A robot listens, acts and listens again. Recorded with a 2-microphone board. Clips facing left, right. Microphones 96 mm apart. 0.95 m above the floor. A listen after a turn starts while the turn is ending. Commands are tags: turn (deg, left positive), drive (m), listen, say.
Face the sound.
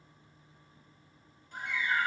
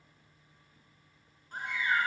<turn deg="-45"/>
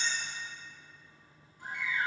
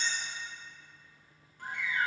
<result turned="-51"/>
<turn deg="-80"/>
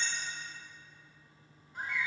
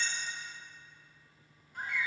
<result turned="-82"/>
<say>Facing the bird.</say>